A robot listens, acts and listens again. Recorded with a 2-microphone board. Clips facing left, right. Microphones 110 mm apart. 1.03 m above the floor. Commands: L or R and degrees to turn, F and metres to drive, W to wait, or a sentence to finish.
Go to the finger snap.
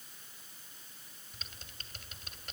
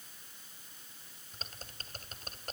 W
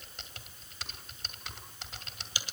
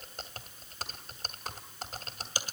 W
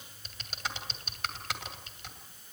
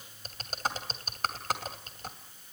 I can't make out a finger snap, only typing on a keyboard.